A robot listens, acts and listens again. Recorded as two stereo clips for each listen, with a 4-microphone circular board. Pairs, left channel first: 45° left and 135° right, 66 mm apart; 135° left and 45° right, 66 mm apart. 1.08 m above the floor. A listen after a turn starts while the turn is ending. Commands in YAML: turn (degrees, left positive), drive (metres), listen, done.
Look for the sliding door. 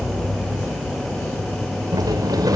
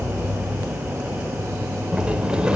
turn: -120
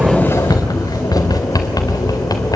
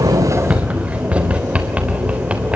turn: 30
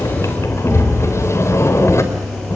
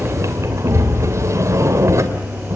done: "Facing the sliding door."